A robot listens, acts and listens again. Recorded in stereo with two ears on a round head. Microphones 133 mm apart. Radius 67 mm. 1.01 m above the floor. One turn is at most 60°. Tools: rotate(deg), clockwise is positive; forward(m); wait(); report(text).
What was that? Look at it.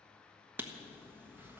rotate(30)
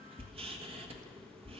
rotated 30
rotate(60)
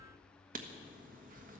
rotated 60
rotate(60)
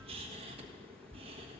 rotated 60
rotate(45)
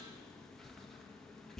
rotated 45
report("Facing the writing, 1 to 2 m away.")